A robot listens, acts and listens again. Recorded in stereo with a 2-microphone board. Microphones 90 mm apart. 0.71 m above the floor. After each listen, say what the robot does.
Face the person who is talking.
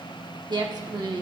Turn 55° right.
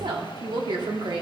Turn 65° right.
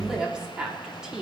Turn 10° right.
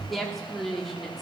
Found it: a woman speaking, straight ahead.